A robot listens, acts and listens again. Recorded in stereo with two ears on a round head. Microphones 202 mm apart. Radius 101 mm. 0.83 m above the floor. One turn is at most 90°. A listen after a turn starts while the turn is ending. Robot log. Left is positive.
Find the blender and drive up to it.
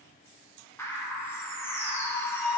cmd idle
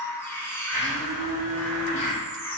note: The blender: about 40° left or 140° left.
cmd yaw +40
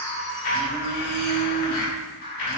note: So it is at 100° left.
cmd yaw +90
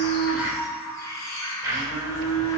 note: The blender is now 15° right.
cmd yaw -15
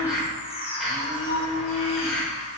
cmd fwd 1.0
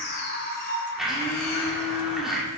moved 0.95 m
cmd fwd 1.0
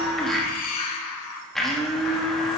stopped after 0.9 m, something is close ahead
end: Arrived at the blender, straight ahead.